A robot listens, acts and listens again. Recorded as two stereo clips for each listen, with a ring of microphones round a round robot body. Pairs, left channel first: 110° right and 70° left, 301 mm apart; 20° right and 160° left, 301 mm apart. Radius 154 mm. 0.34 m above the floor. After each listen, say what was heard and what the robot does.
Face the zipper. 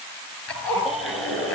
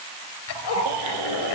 The zipper: 25° right. Turn 25° right.
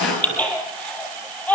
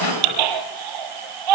The zipper is now 20° right. Turn 20° right.
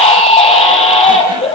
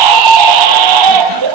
Keep listening.
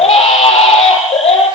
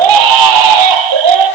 Keep listening.
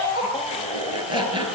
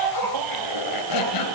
The zipper is now 10° right. Turn 10° right.
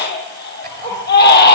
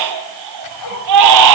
Found it: a zipper, straight ahead, 2 to 4 m away.